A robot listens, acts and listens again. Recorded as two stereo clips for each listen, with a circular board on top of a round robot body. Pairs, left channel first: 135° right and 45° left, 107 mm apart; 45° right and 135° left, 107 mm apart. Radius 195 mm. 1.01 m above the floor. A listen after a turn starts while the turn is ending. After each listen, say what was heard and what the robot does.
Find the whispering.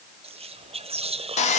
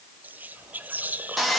The whispering: 60° left. Turn 60° left.
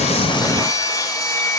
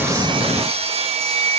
Keep listening.
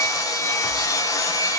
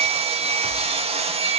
Keep listening.
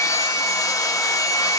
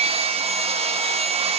Facing where the whispering came from. I can't hear it now.